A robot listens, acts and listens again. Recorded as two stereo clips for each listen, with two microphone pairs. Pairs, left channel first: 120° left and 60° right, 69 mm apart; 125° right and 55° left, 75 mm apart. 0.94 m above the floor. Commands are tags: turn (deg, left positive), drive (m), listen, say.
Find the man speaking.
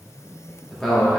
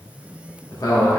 <turn deg="-145"/>
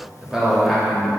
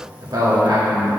<turn deg="30"/>
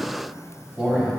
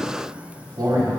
<turn deg="15"/>
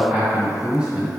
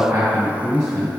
<turn deg="10"/>
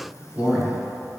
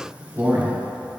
<say>Facing the man speaking.</say>